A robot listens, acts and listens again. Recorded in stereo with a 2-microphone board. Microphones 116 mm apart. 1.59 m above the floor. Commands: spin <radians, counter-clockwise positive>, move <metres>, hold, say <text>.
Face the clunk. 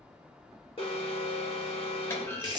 spin 0.35
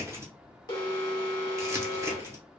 hold
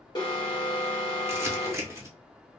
say I heard a clunk, but can't make it out now. It was about straight ahead or 140° left.